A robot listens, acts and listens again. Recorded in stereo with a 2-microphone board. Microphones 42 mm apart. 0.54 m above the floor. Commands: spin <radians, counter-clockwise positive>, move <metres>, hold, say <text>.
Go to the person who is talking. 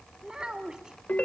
spin -0.35
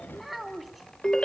move 1.0
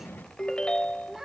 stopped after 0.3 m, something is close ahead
spin -0.17
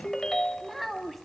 say Something is in my way. I am facing the child speaking but have not reached it.